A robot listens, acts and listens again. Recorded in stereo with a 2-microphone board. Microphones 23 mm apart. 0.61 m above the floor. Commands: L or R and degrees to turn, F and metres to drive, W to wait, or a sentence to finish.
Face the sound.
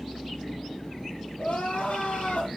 L90
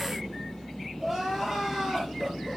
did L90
R15
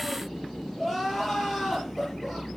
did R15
Found it: crying, straight ahead, over 4 m away.